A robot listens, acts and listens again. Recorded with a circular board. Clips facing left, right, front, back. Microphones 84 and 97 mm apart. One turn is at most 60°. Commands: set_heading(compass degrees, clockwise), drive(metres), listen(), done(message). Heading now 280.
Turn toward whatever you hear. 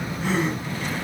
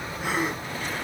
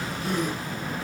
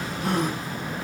set_heading(340)
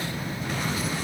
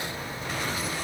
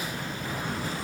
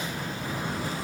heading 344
set_heading(44)
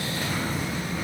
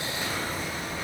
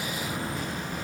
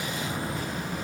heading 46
set_heading(91)
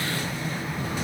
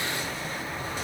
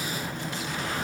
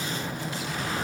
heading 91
done("I heard a gasp from this way, but can't make it out now.")